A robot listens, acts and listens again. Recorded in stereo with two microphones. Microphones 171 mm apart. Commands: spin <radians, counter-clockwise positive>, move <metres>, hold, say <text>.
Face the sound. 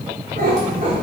spin -0.96
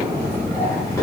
spin 0.26
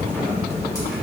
hold
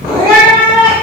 spin 0.61
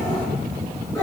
spin 0.35
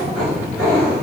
spin 0.17
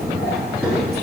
say Found it: a cat meowing, straight ahead.